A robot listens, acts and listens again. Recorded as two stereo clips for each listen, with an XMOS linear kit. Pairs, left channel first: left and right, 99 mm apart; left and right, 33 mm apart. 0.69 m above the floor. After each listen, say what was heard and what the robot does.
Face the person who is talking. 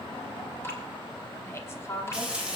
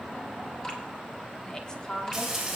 The woman speaking: about 25° left or 155° left. Turn 25° left.
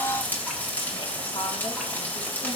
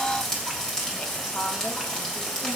Keep listening.
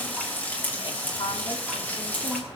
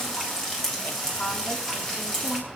So it is at 120° left. Turn 120° left.
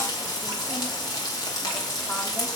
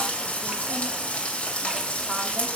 Keep listening.
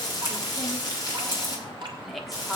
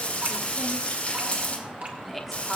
Found it: a woman speaking, straight ahead.